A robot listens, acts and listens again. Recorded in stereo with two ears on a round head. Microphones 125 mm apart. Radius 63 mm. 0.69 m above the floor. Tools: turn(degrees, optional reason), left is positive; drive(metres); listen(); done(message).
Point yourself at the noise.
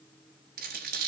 turn(degrees=-90)
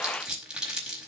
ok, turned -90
done("Found it: crumpling, straight ahead, over 4 m away.")